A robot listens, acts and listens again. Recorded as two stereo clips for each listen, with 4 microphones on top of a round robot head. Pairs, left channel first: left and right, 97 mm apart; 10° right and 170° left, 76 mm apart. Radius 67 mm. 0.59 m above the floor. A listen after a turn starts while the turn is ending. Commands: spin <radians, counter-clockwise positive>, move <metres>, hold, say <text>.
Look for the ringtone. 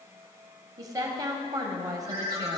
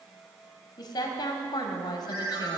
spin -2.36
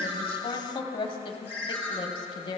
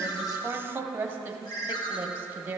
spin 0.26
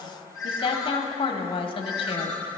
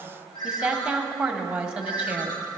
say Found it: a ringtone, straight ahead, 2 to 4 m away.